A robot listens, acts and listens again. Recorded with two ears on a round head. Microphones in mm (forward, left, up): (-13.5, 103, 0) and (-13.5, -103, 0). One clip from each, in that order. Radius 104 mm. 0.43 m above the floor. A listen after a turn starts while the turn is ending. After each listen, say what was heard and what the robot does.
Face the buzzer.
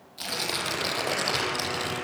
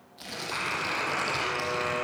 Turn 90° right.
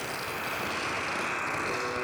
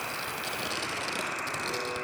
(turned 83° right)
Facing the buzzer.